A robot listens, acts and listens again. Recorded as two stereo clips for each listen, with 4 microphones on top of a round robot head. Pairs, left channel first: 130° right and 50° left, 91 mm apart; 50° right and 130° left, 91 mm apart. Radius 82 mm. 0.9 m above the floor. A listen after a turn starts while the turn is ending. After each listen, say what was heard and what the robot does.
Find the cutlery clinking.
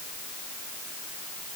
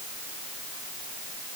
Keep listening.
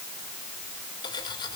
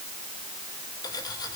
The cutlery clinking: 95° right. Turn 95° right.
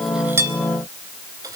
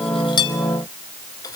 Keep listening.
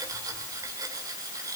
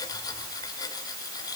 Found it: cutlery clinking, straight ahead.